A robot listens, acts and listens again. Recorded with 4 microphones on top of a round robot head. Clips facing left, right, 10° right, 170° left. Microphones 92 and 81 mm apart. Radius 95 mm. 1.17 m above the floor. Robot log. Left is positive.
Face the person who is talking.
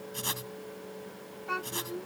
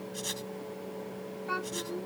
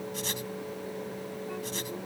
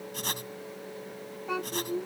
note: The child speaking: 175° right.
cmd yaw -175
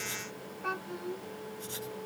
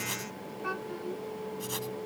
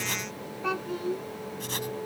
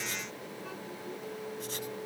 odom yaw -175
end: Found it: a child speaking, straight ahead.